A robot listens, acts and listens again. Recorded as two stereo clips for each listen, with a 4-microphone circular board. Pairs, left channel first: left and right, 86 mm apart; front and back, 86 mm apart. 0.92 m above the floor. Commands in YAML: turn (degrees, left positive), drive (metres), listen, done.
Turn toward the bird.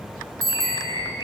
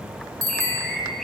turn: 85
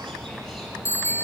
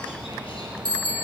listen: true
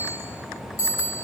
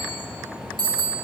listen: true
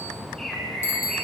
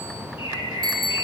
done: "Facing the bird."